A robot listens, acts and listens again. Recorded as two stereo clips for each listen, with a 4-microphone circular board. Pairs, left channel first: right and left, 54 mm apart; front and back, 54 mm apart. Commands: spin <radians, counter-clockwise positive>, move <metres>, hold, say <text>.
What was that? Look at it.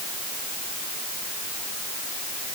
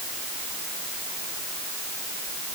hold
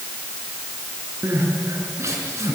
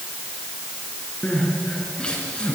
spin 1.22
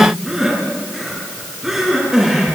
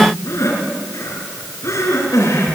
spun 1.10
say Found it: crying, straight ahead.